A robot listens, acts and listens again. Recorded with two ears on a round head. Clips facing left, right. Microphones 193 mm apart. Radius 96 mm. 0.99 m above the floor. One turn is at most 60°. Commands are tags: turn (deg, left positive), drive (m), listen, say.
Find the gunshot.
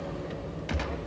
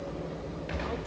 <turn deg="60"/>
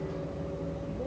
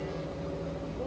<listen/>
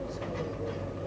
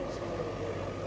<say>I heard a gunshot, but can't make it out now. It was about 5° left or 55° left.</say>